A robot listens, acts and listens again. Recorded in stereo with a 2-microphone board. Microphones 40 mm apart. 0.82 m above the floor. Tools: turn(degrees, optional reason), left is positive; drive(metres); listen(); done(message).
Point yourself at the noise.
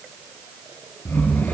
turn(degrees=55, reason="The snoring: about 55° left or 125° left.")
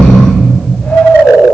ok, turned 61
turn(degrees=60, reason="So it is at 60° left.")
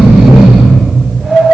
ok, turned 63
done("Found it: snoring, straight ahead.")